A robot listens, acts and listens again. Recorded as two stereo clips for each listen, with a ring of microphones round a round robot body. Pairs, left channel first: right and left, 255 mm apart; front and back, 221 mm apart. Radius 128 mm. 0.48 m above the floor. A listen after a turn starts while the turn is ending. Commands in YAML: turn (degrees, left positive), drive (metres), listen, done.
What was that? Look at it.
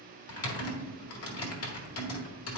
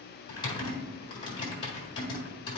turn: -70
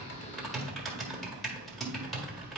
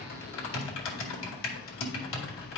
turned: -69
done: "Facing the typing on a keyboard."